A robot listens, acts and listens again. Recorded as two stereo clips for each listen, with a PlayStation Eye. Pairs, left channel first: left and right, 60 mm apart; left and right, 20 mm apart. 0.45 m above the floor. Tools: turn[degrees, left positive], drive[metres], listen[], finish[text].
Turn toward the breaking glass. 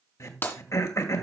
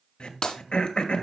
Thought: The breaking glass: about 40° left or 140° left.
Action: turn[40]
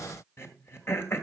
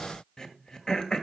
Action: listen[]
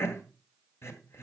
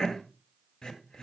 Action: finish[I heard breaking glass, but can't make it out now. It was about straight ahead or 100° left.]